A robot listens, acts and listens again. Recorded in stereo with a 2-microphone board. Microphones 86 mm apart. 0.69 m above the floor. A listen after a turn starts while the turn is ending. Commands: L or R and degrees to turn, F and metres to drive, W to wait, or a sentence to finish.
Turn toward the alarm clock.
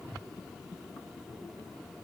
W
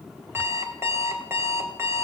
R30
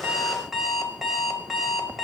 Found it: an alarm clock, straight ahead, 1 to 2 m away.